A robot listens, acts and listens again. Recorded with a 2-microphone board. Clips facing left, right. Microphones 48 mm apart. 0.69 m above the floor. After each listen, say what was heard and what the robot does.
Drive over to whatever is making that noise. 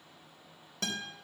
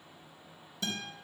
The guitar: about 70° left or 110° left. Turn 70° left.
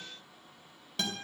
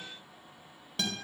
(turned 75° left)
Drive 1.0 m forward.
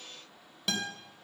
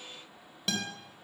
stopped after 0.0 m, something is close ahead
Blocked. The guitar is further on, straight ahead.